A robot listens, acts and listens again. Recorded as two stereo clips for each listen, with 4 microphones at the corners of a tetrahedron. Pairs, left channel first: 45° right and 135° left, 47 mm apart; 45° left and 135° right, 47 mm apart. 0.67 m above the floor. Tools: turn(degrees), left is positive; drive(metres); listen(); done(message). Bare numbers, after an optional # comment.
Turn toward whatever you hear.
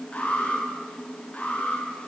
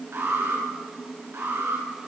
# The alarm: 110° right.
turn(-110)
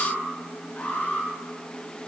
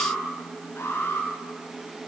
# The alarm is now 10° left.
turn(10)
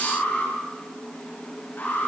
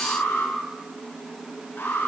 done("Facing the alarm.")